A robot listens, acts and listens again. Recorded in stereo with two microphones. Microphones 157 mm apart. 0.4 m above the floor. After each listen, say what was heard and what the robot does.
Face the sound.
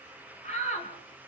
The shout: about 45° left or 135° left. Turn 45° left.
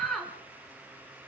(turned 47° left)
Facing the shout, over 4 m away.